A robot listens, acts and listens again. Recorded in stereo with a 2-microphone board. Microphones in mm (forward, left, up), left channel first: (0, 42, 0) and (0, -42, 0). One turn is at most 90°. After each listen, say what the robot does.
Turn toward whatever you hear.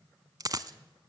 Turn 45° right.
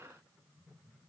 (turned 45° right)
Keep listening.
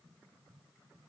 I heard a dropped coin, but can't make it out now. It was about straight ahead or 90° right.